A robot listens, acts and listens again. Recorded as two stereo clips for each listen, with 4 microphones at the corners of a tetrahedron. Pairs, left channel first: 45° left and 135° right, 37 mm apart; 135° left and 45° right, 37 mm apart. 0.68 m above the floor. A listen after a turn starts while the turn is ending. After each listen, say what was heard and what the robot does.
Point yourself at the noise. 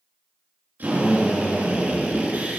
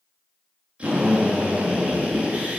The drill: 105° right. Turn 105° right.
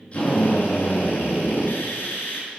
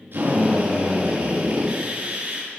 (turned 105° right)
The drill is now 20° left. Turn 20° left.
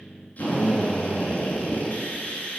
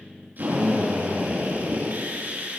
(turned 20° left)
Found it: a drill, straight ahead, over 4 m away.